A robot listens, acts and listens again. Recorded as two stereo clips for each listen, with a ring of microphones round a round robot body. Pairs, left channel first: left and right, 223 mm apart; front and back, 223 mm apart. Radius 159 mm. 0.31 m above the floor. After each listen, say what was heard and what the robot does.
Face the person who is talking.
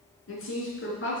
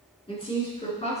The woman speaking: 60° left. Turn 60° left.
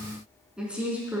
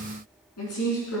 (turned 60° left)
The woman speaking is now 10° right. Turn 10° right.
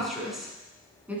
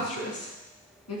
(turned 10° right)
Facing the woman speaking.